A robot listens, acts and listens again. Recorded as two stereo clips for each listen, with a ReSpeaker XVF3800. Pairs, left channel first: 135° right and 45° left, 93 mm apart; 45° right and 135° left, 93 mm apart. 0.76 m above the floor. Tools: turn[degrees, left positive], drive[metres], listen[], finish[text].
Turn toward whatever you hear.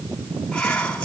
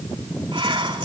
Thought: The whispering: 145° left.
Action: turn[145]
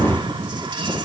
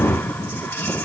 Thought: The whispering is now 15° left.
Action: turn[15]
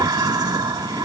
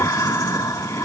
Action: finish[Found it: whispering, straight ahead.]